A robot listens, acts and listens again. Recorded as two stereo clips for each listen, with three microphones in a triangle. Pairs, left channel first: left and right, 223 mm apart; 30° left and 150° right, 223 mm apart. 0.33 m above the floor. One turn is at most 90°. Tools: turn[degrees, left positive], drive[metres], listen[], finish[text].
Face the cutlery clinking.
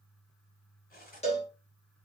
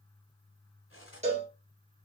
Thought: The cutlery clinking: 45° left.
Action: turn[45]
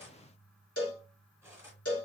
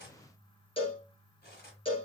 Thought: The cutlery clinking is now 10° right.
Action: turn[-10]
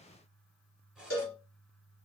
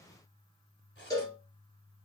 Action: finish[Facing the cutlery clinking, 1 to 2 m away.]